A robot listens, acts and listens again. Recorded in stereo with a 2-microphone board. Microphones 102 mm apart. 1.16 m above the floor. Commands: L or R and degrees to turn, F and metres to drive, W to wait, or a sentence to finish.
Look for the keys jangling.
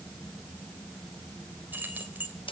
R15
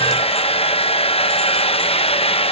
W
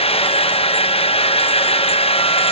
W
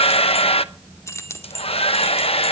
L30
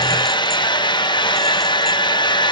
W
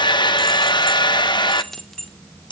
Found it: keys jangling, straight ahead.